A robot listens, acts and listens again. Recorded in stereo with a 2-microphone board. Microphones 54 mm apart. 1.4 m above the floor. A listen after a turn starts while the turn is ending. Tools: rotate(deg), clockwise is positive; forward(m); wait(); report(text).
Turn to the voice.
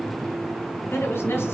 rotate(-50)
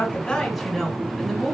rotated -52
report("Facing the woman speaking.")